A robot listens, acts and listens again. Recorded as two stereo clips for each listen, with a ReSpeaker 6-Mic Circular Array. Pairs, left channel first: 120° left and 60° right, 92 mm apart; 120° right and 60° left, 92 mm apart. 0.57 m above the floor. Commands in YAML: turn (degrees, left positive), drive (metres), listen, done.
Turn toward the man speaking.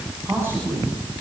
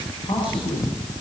turn: -125
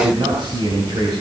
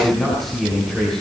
turn: -35
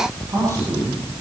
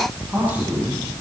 turn: -15
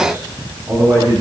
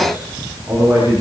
done: "Found it: a man speaking, straight ahead, over 4 m away."